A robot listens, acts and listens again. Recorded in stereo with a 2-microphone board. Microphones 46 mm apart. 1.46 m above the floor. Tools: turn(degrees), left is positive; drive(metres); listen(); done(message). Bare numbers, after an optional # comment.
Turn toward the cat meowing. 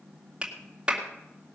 listen()
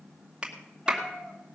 # The cat meowing: about 20° left or 160° left.
turn(20)
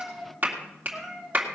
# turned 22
# So it is at 10° right.
turn(-10)
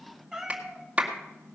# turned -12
done("Found it: a cat meowing, straight ahead.")